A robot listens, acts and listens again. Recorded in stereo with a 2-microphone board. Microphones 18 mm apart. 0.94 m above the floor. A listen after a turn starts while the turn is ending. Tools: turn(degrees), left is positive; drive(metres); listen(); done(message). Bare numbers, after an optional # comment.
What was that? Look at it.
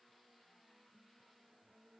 listen()
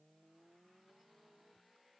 listen()
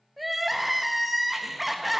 turn(-30)
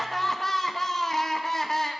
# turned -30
# So it is at 30° left.
turn(30)
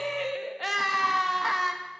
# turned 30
done("Facing the crying.")